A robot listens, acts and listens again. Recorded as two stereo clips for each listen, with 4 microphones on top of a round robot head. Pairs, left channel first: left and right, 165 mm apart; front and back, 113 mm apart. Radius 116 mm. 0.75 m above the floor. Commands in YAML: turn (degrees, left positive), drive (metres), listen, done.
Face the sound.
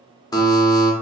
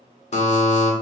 turn: 20
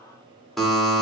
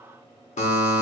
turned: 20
done: "Found it: a buzzer, straight ahead, 1 to 2 m away."